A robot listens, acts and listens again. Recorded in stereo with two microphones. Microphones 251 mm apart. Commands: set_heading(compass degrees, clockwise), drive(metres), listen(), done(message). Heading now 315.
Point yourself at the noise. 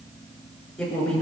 set_heading(285)
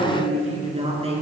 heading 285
set_heading(310)
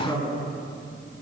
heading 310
set_heading(300)
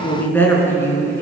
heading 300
set_heading(290)
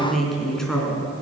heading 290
done("Found it: a woman speaking, straight ahead.")